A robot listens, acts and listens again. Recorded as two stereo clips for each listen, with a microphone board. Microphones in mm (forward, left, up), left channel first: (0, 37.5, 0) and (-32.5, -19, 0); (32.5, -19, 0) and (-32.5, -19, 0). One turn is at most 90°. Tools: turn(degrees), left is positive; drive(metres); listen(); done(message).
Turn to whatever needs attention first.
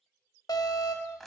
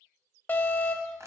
turn(degrees=65)
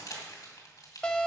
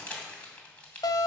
turn(degrees=-15)
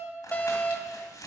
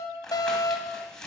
done("Found it: an alarm, straight ahead, 1 to 2 m away.")